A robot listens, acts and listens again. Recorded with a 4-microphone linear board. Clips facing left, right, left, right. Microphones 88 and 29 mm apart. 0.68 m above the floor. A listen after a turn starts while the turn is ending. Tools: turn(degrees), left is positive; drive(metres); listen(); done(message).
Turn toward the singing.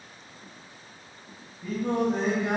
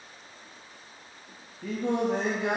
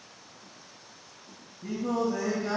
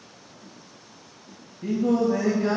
turn(degrees=-75)
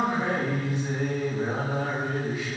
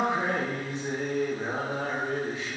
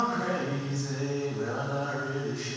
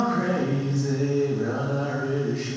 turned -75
turn(degrees=-30)
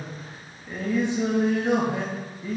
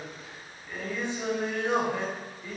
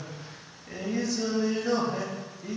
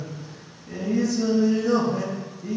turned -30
turn(degrees=20)
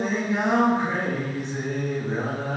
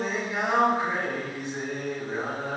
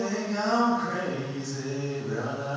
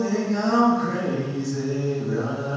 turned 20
done("Found it: singing, straight ahead.")